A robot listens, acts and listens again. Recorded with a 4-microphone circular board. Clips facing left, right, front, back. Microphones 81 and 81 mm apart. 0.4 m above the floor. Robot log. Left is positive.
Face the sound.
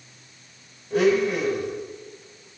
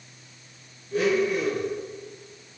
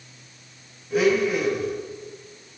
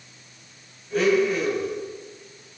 note: The blender: 85° left.
cmd yaw +85
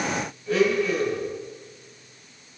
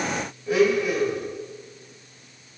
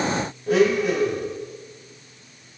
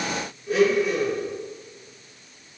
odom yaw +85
note: The blender is now 15° right.
cmd yaw -15
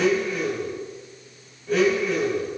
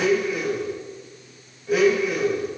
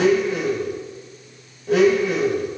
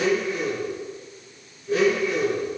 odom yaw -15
end: Facing the blender, under 1 m away.